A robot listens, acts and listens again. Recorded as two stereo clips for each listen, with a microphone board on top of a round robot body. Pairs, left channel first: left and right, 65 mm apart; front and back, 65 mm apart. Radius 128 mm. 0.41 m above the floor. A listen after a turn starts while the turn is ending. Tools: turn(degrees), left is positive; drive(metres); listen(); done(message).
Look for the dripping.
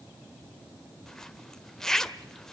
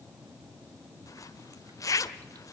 listen()
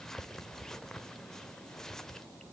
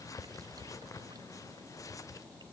listen()
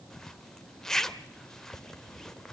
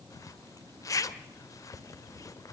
done("I can't make out dripping to turn to.")